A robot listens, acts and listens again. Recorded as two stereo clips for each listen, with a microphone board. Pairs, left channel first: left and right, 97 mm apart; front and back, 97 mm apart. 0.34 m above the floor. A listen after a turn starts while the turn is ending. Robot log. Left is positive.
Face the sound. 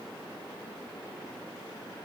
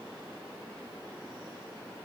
cmd idle
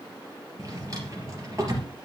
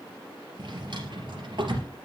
note: The drawer: 145° right.
cmd yaw -145
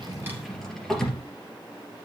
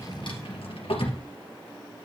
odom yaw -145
end: Facing the drawer.